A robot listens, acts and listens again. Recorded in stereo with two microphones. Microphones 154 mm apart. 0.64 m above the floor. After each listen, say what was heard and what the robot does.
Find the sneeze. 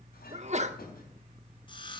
The sneeze: about 45° right or 135° right. Turn 45° right.
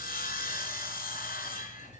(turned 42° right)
Keep listening.
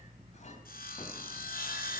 I heard a sneeze, but can't make it out now. It was about 5° right or 90° right.